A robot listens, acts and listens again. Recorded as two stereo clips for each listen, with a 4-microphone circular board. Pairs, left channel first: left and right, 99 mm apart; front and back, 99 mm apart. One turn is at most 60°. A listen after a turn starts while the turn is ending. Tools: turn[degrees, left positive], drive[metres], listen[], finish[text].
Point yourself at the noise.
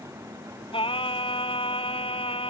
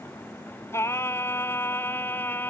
Thought: The singing: 70° left.
Action: turn[60]
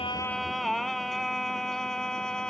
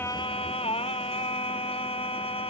Action: finish[Facing the singing.]